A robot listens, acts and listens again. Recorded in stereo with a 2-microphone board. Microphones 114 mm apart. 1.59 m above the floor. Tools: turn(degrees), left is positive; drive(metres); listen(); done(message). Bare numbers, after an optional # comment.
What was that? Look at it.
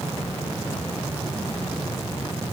listen()
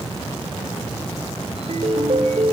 # The ringtone: about 60° right or 120° right.
turn(-60)
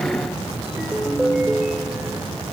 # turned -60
done("Facing the ringtone.")